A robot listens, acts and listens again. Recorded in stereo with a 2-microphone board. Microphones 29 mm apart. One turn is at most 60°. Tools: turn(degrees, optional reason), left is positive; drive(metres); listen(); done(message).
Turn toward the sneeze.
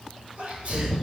turn(degrees=-45, reason="The sneeze: about 45° right or 135° right.")
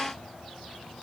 listen()
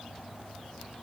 done("I heard a sneeze, but can't make it out now. It was about straight ahead or 90° right.")